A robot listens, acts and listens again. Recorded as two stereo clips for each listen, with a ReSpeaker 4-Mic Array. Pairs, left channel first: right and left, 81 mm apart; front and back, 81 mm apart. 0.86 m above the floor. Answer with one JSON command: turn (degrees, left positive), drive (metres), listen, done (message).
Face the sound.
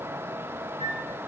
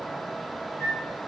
{"turn": 55}
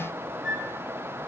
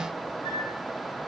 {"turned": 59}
{"done": "Facing the flute."}